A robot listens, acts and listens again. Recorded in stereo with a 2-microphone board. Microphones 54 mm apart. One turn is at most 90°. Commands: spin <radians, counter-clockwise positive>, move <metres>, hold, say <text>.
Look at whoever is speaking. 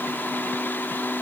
hold
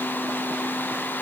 hold
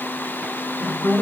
spin 1.05
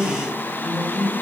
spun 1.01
spin 0.17
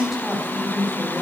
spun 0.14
say Found it: a woman speaking, straight ahead.